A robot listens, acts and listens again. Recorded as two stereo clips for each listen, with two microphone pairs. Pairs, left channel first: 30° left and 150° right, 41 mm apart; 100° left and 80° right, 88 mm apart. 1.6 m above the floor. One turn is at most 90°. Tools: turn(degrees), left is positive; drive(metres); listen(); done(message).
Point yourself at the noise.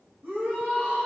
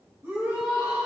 turn(degrees=-90)
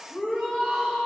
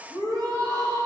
turn(degrees=-35)
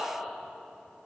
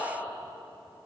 done("Found it: a shout, straight ahead, 2 to 4 m away.")